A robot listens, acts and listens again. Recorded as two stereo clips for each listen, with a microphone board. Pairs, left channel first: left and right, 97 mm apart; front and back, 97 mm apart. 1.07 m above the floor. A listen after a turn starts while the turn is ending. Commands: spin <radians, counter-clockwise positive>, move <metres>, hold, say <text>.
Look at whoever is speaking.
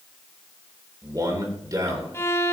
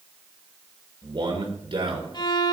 spin -2.44
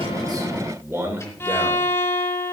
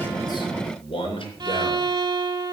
spin -0.44
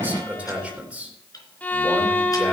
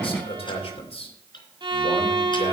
spin -0.26
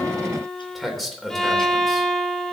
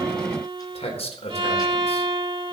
say Facing the man speaking.